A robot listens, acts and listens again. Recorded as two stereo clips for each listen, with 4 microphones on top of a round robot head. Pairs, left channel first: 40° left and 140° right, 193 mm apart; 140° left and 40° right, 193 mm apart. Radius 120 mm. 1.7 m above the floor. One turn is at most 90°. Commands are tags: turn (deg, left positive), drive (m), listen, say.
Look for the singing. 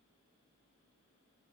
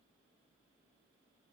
<listen/>
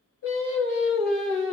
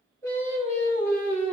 <turn deg="60"/>
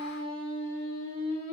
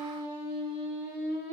<turn deg="15"/>
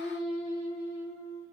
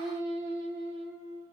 <say>Found it: singing, straight ahead, over 4 m away.</say>